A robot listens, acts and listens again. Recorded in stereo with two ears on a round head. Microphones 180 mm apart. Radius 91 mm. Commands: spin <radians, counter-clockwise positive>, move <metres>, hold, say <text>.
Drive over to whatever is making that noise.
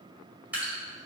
spin -0.52
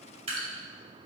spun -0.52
spin -2.53
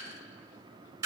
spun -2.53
spin -0.26
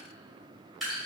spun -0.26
move 1.0
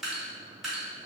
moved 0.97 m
move 1.0
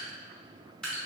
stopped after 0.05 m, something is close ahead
say I am next to the dripping.